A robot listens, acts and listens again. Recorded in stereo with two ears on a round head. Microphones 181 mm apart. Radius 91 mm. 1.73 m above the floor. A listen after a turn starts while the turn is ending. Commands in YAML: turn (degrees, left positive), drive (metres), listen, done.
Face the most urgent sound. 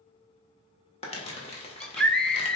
turn: 30
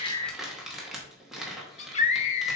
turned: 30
turn: 145
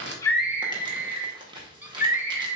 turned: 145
turn: -10
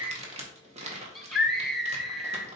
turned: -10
done: "Facing the scream."